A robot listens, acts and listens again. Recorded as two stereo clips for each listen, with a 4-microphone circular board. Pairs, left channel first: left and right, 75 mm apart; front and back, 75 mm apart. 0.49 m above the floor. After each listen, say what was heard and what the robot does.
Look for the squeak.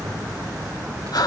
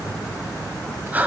Keep listening.
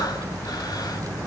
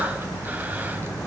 Keep listening.
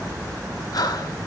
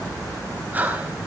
I can't make out a squeak to turn to.